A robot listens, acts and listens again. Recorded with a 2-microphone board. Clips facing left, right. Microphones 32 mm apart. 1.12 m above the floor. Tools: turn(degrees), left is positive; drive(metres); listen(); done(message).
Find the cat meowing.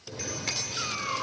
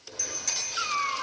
turn(degrees=-30)
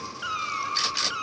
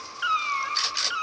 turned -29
turn(degrees=-30)
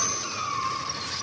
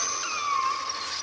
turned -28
turn(degrees=-25)
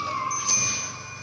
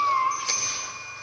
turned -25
turn(degrees=-140)
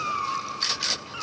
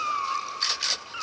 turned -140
turn(degrees=-10)
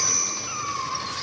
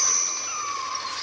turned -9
done("Found it: a cat meowing, straight ahead, 2 to 4 m away.")